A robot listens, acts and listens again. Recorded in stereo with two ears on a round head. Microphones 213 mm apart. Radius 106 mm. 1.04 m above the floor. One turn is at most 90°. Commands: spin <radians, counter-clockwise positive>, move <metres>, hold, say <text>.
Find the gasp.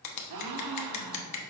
spin -1.57
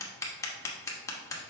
say Facing where the gasp came from. I can't hear it now.